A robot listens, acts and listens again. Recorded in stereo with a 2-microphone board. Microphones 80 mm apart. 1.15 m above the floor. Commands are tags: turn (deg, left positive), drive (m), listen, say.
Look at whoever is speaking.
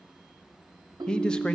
<turn deg="30"/>
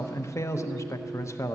<turn deg="140"/>
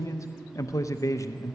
<turn deg="40"/>
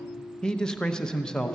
<turn deg="10"/>
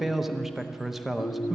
<say>Found it: a man speaking, straight ahead, under 1 m away.</say>